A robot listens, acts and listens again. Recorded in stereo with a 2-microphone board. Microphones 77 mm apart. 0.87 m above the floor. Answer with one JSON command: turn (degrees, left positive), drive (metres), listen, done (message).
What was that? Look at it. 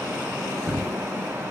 {"turn": -15}
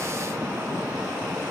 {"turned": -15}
{"listen": true}
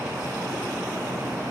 {"done": "I heard a thud, but can't make it out now. It was about straight ahead or 150° right."}